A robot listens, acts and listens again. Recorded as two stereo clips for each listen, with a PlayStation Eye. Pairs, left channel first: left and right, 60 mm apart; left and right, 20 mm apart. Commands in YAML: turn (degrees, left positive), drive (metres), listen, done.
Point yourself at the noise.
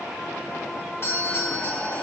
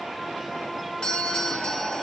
turn: 45
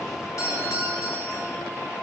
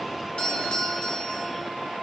turn: 85
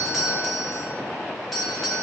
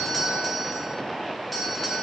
done: "Facing the doorbell."